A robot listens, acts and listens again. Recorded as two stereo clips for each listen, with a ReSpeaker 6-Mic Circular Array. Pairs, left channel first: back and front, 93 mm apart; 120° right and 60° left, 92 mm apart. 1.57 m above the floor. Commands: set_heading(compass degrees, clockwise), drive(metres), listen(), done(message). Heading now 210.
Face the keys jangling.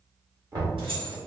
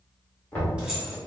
set_heading(235)
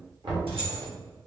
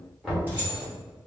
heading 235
set_heading(250)
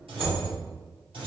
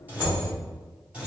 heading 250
set_heading(265)
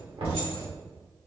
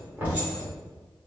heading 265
listen()
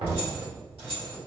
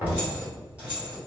set_heading(285)
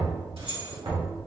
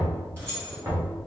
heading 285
set_heading(295)
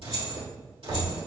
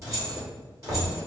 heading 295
done("Facing the keys jangling, 2 to 4 m away.")